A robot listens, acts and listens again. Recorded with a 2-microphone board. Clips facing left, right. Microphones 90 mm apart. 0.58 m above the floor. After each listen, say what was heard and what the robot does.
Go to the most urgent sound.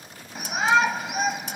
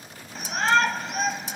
Turn 30° left.
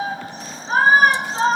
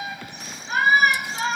So it is at 140° left. Turn 140° left.
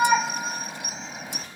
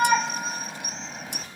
Drive 1.0 m forward.
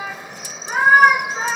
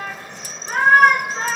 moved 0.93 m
Drive 1.0 m forward.
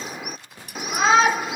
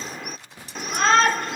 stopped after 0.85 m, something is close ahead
The shout is now 10° left. Turn 10° left.
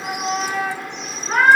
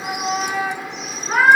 Arrived at the shout, straight ahead.